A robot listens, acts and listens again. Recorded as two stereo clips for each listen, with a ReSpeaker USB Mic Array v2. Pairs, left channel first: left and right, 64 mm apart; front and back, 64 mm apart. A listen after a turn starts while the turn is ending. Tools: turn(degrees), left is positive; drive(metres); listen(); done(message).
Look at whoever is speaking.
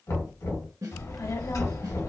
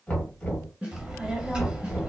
turn(degrees=105)
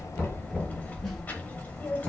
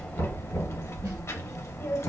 turn(degrees=30)
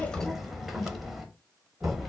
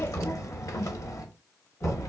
done("Found it: a child speaking, straight ahead.")